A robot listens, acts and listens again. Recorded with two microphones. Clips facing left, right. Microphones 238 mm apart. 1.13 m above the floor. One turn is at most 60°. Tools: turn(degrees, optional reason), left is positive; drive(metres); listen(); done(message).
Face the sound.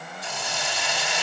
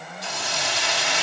turn(degrees=-60, reason="The hiss: about 75° right or 105° right.")
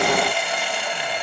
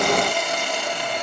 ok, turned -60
turn(degrees=-45, reason="So it is at 45° right.")
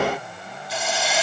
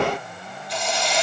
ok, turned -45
done("Facing the hiss, 1 to 2 m away.")